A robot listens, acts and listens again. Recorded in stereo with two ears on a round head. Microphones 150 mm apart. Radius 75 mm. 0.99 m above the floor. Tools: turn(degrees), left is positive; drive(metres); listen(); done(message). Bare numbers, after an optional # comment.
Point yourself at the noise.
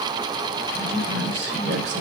turn(-90)
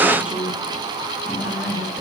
done("Found it: a woman speaking, straight ahead.")